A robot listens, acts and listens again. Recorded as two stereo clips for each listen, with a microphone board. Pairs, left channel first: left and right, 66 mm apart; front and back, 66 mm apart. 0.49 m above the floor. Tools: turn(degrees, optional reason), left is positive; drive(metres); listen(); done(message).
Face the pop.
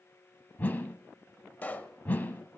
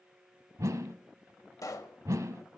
turn(degrees=25, reason="The pop: 25° left.")
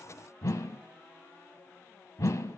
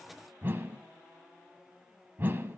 done("Facing where the pop came from. I can't hear it now.")